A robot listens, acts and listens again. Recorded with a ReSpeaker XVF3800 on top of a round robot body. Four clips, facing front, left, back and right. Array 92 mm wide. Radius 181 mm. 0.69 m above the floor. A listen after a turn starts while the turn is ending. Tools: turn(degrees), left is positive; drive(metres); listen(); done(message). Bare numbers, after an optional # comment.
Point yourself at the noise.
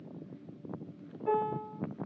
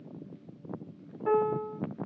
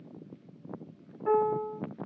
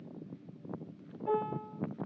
# The piano: 125° left.
turn(125)
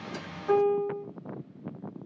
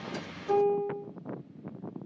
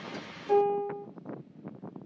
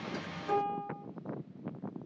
done("Facing the piano.")